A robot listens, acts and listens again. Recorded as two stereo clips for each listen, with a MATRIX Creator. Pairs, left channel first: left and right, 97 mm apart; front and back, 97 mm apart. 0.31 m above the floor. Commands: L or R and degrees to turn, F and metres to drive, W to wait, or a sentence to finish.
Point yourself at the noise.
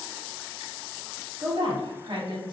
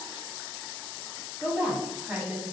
R110
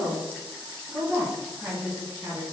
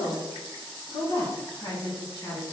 R35
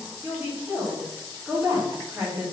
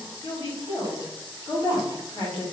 R10
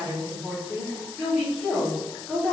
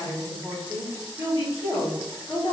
Found it: a woman speaking, straight ahead, 2 to 4 m away.